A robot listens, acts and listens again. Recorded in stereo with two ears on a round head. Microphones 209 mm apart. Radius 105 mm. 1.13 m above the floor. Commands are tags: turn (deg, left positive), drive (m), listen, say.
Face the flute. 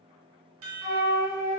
<turn deg="15"/>
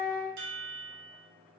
<turn deg="150"/>
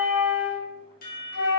<turn deg="55"/>
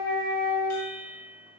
<turn deg="20"/>
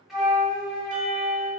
<say>Facing the flute.</say>